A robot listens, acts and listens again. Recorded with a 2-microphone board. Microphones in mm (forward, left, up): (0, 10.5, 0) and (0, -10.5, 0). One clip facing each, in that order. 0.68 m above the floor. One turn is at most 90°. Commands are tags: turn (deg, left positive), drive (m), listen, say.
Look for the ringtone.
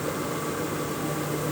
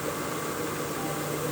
<listen/>
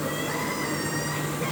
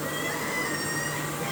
<listen/>
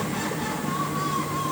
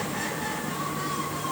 <say>I can't make out a ringtone to turn to.</say>